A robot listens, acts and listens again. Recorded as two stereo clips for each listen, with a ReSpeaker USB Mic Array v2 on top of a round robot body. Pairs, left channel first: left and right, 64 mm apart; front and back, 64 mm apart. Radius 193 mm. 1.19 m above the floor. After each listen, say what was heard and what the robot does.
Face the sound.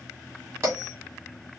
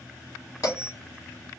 The bell: 45° right. Turn 45° right.
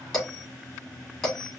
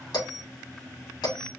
Found it: a bell, straight ahead, 2 to 4 m away.